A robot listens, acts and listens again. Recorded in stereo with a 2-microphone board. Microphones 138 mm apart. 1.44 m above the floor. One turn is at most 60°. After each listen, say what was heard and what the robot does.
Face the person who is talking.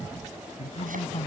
The man speaking: about 50° left or 130° left. Turn 50° left.
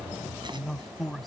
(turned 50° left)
Found it: a man speaking, straight ahead.